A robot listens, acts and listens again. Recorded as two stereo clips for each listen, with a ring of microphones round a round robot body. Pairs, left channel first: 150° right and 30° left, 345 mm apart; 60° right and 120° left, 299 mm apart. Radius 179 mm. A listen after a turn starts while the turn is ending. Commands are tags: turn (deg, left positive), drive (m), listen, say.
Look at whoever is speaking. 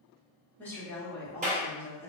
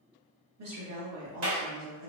<turn deg="125"/>
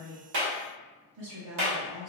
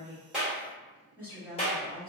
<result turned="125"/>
<turn deg="40"/>
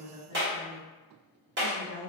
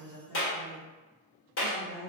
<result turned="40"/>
<turn deg="10"/>
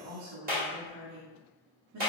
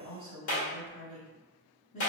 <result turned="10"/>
<say>Found it: a woman speaking, straight ahead, 1 to 2 m away.</say>